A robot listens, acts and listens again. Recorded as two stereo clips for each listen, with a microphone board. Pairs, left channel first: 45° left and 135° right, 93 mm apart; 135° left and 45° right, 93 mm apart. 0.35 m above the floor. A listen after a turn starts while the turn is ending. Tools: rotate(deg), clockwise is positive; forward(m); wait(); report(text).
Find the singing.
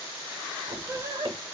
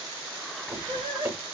rotate(80)
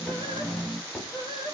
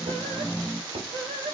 report("Found it: singing, straight ahead, 1 to 2 m away.")